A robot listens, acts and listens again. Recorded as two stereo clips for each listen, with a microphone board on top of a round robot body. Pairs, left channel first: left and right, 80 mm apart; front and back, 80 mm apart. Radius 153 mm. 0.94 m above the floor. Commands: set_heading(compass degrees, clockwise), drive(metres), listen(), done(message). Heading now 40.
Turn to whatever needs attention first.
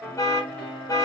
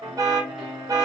set_heading(265)
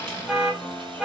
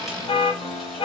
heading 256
set_heading(266)
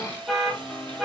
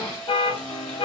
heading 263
done("Found it: an alarm, straight ahead, 1 to 2 m away.")